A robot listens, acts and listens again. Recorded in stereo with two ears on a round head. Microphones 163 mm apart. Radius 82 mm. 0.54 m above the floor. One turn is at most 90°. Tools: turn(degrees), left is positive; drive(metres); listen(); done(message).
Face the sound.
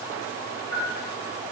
turn(degrees=20)
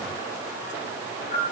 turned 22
turn(degrees=90)
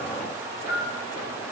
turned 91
turn(degrees=50)
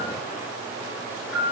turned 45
done("Found it: a bell, straight ahead.")